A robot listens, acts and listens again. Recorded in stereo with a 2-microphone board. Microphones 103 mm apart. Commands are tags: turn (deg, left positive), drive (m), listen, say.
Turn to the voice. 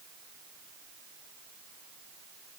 <listen/>
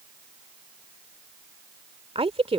<turn deg="-65"/>
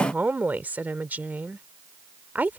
<turn deg="-15"/>
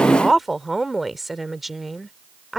<say>Found it: a woman speaking, straight ahead.</say>